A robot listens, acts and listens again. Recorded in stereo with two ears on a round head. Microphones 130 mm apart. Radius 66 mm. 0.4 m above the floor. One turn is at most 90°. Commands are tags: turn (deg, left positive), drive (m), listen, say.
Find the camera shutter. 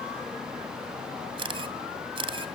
<turn deg="-35"/>
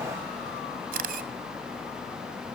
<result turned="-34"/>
<turn deg="-90"/>
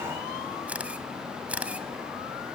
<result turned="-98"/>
<turn deg="-10"/>
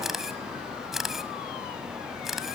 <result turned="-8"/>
<say>Facing the camera shutter, 1 to 2 m away.</say>